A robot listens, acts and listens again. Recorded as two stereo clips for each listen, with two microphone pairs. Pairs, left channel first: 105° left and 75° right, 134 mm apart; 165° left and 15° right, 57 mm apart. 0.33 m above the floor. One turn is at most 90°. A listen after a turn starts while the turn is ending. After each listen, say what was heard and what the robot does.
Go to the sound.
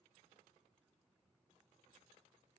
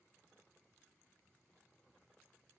Keep listening.
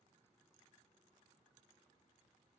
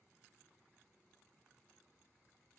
Keep listening.
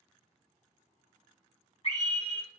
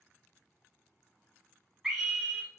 The scream: 70° left. Turn 70° left.
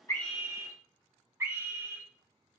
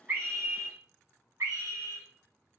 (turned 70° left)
The scream is now 10° right. Turn 10° right.
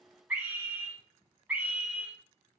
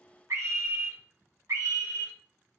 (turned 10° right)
Drive 1.0 m forward.
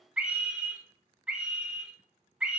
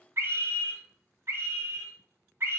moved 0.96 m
Drive 1.0 m forward.
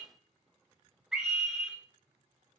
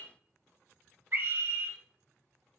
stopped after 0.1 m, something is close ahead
The scream is now 10° left. Turn 10° left.
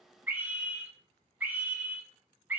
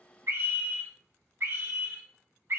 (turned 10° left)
Arrived at the scream, straight ahead.